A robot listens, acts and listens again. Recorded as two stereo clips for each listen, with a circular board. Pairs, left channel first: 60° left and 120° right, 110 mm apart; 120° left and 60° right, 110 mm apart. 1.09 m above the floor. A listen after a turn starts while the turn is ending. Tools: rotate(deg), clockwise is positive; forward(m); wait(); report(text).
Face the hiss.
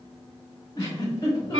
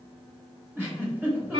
wait()
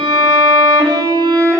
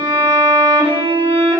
wait()
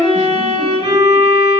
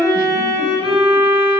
report("I can't make out a hiss to turn to.")